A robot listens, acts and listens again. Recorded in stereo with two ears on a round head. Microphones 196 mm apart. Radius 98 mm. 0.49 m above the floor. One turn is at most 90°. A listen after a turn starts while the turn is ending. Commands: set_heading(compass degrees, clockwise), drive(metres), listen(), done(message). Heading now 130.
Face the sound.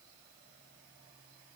listen()
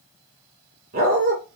set_heading(170)
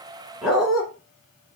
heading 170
done("Facing the dog barking.")